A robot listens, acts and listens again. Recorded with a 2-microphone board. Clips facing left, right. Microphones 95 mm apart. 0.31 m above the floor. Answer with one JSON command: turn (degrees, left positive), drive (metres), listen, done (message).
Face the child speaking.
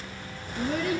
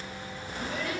{"turn": 55}
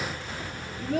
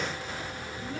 {"turn": 75}
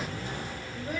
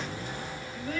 {"turn": 20}
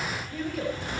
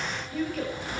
{"done": "Facing the child speaking, over 4 m away."}